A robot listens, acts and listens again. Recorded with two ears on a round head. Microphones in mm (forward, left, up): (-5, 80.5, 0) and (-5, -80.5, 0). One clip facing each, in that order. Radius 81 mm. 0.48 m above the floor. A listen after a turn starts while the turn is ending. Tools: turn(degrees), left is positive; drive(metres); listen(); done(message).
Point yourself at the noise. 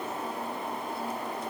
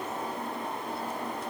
listen()
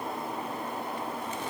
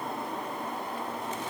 listen()
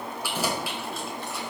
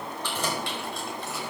turn(degrees=30)
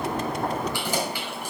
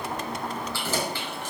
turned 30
turn(degrees=30)
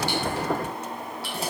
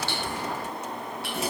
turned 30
turn(degrees=145)
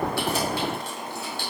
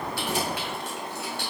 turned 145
turn(degrees=30)
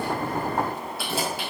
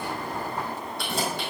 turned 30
done("Found it: keys jangling, straight ahead, 2 to 4 m away.")